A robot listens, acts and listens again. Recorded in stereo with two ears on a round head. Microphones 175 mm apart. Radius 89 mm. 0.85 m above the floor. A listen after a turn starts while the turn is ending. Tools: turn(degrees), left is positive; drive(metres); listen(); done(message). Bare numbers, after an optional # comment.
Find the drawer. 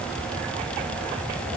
listen()
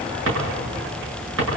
# The drawer: about 70° right or 110° right.
turn(-70)
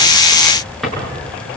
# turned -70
done("Facing the drawer, over 4 m away.")